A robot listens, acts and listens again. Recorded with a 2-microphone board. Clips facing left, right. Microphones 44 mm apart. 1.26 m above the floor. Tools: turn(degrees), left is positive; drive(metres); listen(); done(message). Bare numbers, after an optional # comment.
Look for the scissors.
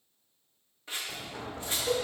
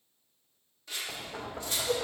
# The scissors: about 25° left or 155° left.
turn(25)
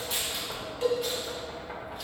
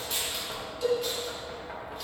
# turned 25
listen()
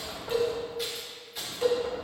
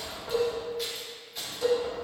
listen()
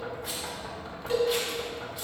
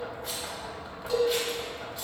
done("I heard scissors, but can't make it out now. It was about straight ahead or 130° left.")